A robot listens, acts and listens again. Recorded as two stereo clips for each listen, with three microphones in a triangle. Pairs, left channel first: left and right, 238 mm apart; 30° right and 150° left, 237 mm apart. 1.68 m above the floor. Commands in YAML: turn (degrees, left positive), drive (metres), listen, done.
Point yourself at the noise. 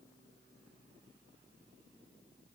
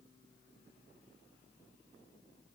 listen: true
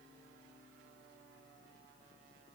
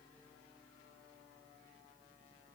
listen: true
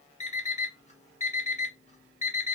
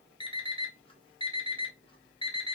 turn: 35
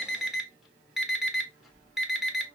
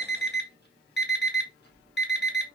done: "Found it: an alarm clock, straight ahead, 1 to 2 m away."